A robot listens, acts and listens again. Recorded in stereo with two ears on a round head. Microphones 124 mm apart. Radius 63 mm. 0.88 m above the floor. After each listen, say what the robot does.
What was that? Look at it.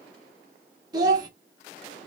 Turn 30° right.
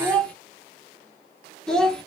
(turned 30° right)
Found it: a child speaking, straight ahead.